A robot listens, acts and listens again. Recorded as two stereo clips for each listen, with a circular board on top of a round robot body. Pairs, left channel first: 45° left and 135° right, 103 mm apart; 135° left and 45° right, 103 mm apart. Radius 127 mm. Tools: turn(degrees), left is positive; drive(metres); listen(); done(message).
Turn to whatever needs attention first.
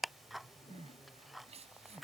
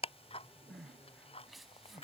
turn(degrees=-135)
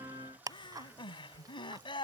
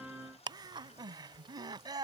done("Found it: crying, straight ahead.")